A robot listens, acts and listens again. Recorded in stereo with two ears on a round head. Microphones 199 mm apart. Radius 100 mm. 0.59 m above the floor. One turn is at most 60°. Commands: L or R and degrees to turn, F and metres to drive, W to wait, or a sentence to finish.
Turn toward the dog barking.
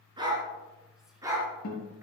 R15
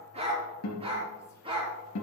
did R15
R25
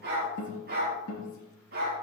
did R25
R60
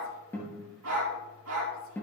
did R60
R60
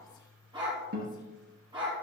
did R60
R20
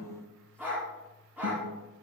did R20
Found it: a dog barking, straight ahead, over 4 m away.